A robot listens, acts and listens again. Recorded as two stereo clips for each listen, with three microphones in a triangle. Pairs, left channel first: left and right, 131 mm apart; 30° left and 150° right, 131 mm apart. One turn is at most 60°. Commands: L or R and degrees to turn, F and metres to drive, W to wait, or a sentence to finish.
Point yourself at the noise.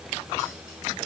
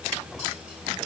W
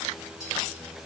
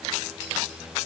W
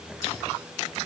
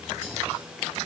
I can't make out anything.